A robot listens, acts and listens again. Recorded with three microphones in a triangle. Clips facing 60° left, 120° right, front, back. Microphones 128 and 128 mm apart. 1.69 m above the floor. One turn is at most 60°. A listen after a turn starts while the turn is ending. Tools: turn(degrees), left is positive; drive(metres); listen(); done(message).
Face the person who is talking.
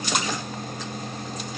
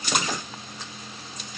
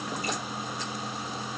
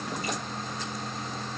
listen()
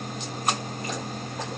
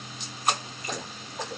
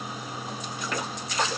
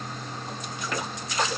listen()
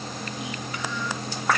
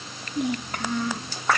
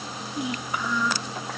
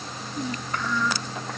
turn(degrees=-60)
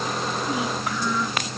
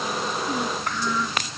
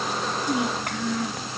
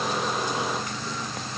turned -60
turn(degrees=-25)
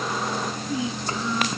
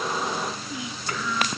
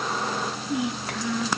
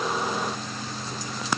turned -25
done("Found it: a child speaking, straight ahead.")